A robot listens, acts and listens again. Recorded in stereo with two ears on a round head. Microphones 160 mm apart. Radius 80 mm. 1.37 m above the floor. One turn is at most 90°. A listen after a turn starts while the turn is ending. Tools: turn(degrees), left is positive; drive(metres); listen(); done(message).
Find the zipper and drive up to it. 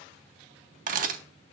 listen()
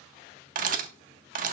listen()
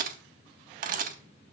done("I can't make out a zipper, only a camera shutter.")